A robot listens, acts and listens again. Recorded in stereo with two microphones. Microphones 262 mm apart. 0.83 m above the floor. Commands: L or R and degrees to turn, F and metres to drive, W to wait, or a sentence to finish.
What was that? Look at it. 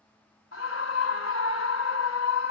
L55
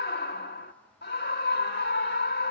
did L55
L50
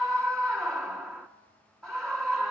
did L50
Facing the scream.